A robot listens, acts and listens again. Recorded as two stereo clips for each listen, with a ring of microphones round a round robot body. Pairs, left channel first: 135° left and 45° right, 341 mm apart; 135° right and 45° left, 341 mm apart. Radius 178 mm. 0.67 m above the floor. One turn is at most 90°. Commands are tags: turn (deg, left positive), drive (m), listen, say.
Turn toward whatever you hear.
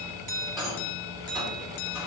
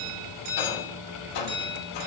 <turn deg="-90"/>
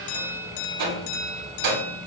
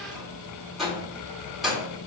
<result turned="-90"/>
<turn deg="-45"/>
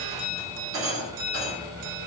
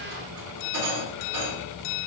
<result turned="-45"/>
<say>Found it: a rattle, straight ahead.</say>